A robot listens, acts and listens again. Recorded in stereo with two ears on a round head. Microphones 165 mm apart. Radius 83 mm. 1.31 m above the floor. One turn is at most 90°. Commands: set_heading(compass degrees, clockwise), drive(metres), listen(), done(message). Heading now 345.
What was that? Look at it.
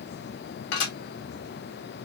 set_heading(280)
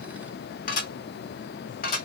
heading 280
set_heading(230)
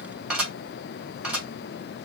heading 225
done("Found it: dishes clattering, straight ahead.")